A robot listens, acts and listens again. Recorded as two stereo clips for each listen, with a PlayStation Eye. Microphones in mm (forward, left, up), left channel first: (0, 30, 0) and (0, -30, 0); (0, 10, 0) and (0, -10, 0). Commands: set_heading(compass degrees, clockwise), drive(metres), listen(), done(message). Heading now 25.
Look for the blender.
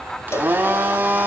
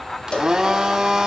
set_heading(55)
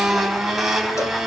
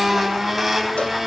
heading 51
done("Found it: a blender, straight ahead, over 4 m away.")